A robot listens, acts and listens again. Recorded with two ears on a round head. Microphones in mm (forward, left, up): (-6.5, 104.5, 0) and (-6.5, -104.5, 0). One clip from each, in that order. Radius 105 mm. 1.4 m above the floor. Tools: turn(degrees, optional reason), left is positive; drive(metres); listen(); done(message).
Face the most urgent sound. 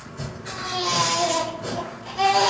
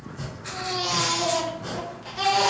turn(degrees=-35, reason="The baby crying: about 35° right or 145° right.")
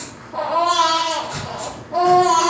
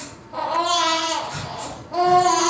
turn(degrees=-110, reason="So it is at 110° right.")
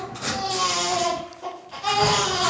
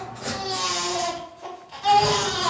done("Found it: a baby crying, straight ahead, 1 to 2 m away.")